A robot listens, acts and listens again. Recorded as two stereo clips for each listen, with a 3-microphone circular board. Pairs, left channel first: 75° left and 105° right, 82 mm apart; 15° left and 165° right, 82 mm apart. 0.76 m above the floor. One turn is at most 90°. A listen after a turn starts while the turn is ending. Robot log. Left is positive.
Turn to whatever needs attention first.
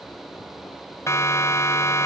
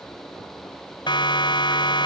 note: The siren: 20° left.
cmd yaw +20
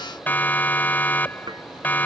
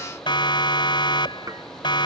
end: Facing the siren.